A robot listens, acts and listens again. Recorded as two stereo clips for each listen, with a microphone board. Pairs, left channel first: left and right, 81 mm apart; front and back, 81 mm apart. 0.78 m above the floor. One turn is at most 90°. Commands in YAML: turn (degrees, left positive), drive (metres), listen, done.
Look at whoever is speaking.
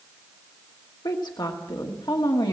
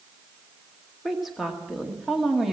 turn: 90
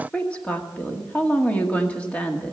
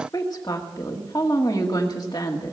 turn: 20
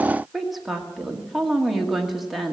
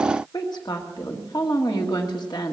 done: "Facing the woman speaking."